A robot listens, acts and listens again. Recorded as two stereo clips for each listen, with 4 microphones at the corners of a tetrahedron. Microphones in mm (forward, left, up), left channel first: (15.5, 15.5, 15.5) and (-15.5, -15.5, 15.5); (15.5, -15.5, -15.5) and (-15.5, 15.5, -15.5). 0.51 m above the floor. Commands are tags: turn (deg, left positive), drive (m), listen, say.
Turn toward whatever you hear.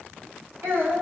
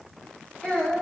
<turn deg="-120"/>
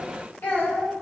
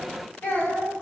<say>Found it: a child speaking, straight ahead, 2 to 4 m away.</say>